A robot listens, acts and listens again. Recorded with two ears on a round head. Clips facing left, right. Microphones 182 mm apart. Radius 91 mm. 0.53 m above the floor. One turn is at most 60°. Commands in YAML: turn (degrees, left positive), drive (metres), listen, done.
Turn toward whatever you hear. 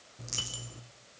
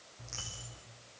turn: 50
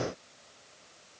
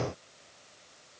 listen: true
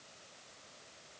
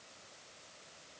done: "I heard a dropped coin, but can't make it out now. It was about straight ahead or 80° left."